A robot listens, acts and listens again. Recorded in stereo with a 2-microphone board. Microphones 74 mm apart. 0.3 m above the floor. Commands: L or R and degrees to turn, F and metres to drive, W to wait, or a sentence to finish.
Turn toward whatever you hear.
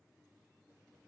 W
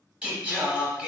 R20
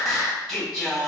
Facing the singing, under 1 m away.